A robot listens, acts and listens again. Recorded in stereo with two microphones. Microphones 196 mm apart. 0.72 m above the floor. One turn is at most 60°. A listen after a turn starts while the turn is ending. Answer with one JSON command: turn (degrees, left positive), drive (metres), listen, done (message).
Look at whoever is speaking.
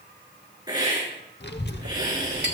{"turn": 60}
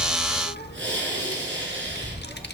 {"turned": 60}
{"turn": 60}
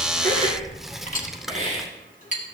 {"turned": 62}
{"done": "Found it: a child speaking, straight ahead, under 1 m away."}